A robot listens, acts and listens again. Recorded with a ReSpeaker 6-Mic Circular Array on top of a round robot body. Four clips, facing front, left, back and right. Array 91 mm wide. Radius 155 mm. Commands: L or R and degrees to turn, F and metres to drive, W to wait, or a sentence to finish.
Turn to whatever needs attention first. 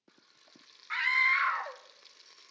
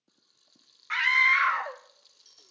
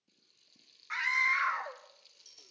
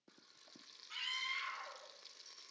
L80
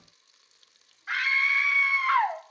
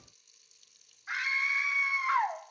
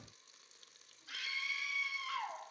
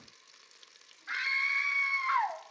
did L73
Found it: a scream, straight ahead.